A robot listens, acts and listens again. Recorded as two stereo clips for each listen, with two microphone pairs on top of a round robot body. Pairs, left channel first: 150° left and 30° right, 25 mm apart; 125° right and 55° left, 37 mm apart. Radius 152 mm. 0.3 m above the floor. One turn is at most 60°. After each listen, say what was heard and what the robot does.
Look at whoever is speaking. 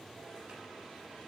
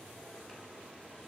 Keep listening.
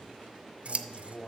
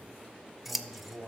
The man speaking: 100° left. Turn 60° left.
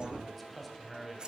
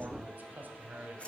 The man speaking is now 60° left. Turn 60° left.
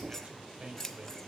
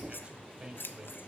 Found it: a man speaking, straight ahead.